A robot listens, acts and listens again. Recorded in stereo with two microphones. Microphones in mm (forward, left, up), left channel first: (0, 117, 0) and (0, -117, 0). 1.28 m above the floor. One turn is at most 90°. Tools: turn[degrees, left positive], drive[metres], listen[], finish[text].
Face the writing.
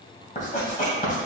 Thought: The writing: about 35° left or 145° left.
Action: turn[35]
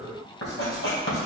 Thought: So it is at 105° left.
Action: turn[90]
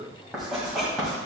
Action: finish[Found it: writing, straight ahead.]